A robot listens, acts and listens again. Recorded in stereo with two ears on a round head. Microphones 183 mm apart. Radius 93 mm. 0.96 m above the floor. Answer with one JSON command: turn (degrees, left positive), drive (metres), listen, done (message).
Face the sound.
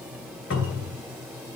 {"turn": 70}
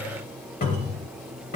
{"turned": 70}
{"turn": 40}
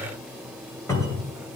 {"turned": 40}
{"turn": 15}
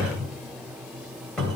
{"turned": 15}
{"done": "Found it: a cupboard door, straight ahead."}